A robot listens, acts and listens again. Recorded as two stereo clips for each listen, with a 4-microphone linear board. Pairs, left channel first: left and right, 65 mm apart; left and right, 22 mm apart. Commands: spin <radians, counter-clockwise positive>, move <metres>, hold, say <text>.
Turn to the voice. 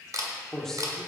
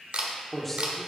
spin 0.52
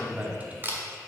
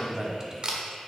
spin -0.44
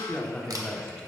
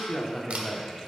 spin 0.17
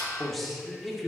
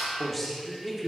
say Facing the man speaking.